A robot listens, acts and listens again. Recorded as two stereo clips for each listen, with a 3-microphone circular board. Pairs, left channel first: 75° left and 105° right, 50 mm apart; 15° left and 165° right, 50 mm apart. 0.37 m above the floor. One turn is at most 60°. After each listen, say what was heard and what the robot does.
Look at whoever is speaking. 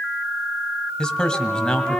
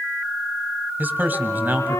The man speaking: 150° left. Turn 60° left.
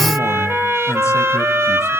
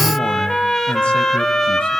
Nothing new. It was at 90° left. Turn 60° left.
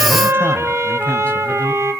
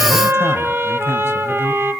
Nothing new. It was at 30° left. Turn 30° left.
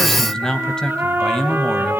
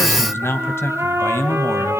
Facing the man speaking.